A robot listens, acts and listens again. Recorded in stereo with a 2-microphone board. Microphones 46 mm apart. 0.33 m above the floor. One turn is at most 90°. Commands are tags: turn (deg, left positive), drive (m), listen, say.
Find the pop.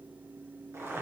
<listen/>
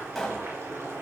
<turn deg="30"/>
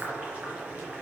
<listen/>
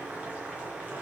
<say>I heard a pop, but can't make it out now. It was about 25° right or 145° left.</say>